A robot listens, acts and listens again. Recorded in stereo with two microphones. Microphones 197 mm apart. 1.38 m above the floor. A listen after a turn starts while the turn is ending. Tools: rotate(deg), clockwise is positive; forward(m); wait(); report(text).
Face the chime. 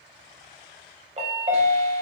rotate(35)
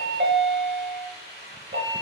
rotate(115)
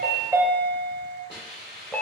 report("Facing the chime, under 1 m away.")